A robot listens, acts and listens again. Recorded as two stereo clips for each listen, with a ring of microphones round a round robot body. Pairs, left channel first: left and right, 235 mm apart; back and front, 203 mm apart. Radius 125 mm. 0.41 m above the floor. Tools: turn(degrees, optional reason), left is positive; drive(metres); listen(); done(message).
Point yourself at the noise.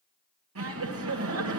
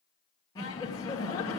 turn(degrees=-105, reason="The laughter: 105° right.")
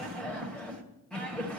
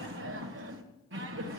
done("Facing the laughter.")